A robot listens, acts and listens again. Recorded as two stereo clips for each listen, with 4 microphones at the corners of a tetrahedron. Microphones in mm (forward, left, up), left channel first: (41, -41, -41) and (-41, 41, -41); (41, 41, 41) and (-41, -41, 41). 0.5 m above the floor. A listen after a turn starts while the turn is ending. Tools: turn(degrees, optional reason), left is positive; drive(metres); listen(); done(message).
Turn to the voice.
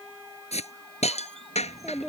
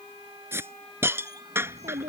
turn(degrees=-135, reason="The child speaking: 135° right.")
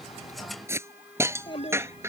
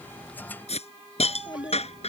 done("Found it: a child speaking, straight ahead.")